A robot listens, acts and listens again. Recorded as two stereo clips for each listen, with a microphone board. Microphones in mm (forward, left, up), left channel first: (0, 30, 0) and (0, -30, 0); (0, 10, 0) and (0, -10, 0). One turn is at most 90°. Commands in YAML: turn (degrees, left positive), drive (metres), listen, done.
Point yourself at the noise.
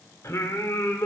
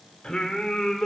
turn: 60
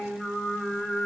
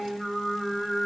done: "Found it: singing, straight ahead."